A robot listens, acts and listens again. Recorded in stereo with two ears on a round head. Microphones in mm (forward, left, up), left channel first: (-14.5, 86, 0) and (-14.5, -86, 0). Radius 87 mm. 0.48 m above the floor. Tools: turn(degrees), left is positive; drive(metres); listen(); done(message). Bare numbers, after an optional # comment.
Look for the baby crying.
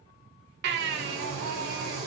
# The baby crying: about 60° right or 120° right.
turn(-60)
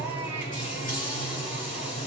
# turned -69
listen()
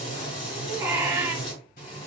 # So it is at 15° right.
turn(-15)
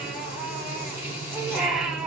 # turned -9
done("Facing the baby crying, 1 to 2 m away.")